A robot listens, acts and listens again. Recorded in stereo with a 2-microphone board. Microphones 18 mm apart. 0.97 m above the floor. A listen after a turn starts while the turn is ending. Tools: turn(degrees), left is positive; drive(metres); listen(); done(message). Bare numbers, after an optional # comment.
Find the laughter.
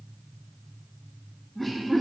turn(30)
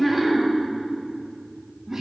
# So it is at 20° right.
turn(-20)
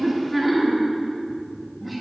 done("Facing the laughter, 2 to 4 m away.")